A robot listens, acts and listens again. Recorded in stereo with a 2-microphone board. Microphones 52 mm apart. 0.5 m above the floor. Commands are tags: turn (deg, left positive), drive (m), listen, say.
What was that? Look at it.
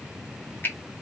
<turn deg="45"/>
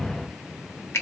<turn deg="80"/>
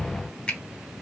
<turn deg="25"/>
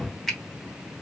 <say>Found it: a finger snap, straight ahead, 1 to 2 m away.</say>